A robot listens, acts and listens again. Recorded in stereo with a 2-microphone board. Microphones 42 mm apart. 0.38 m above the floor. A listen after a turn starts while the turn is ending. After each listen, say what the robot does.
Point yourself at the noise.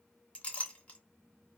Turn 30° left.
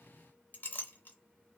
Turn 115° left.
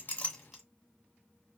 Keep listening.
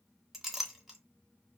Found it: a clink, straight ahead.